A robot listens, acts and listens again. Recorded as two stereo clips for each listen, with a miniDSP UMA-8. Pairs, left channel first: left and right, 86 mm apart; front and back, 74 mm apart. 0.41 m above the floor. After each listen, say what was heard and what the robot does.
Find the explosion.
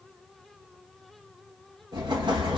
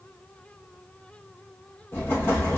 The explosion: 60° right. Turn 60° right.
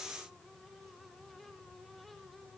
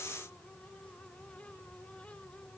Facing where the explosion came from. I can't hear it now.